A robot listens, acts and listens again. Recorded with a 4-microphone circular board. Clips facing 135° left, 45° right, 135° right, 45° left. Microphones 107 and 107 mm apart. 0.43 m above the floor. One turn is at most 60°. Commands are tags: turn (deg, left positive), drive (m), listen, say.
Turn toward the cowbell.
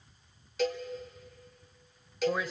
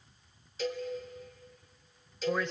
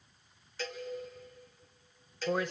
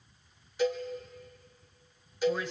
<turn deg="60"/>
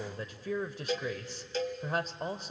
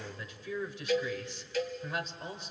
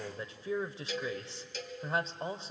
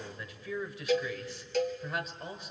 <turn deg="60"/>
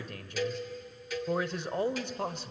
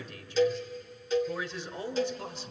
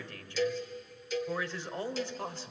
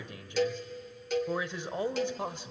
<turn deg="15"/>
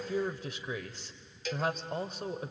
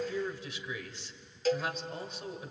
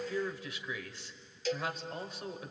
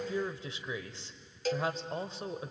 <say>Found it: a cowbell, straight ahead.</say>